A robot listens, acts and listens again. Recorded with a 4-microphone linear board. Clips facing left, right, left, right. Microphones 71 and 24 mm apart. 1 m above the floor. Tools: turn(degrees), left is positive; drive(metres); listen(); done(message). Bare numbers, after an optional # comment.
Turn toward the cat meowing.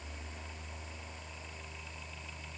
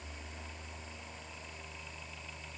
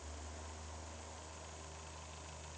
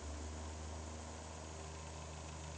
listen()
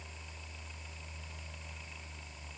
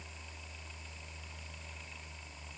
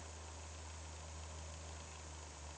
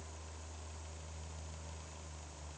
listen()
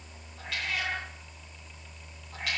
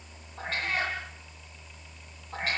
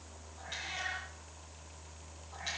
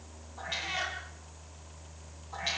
# The cat meowing: about 40° right or 140° right.
turn(-40)
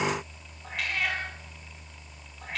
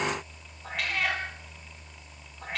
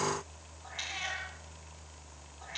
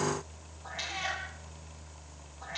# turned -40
done("Facing the cat meowing.")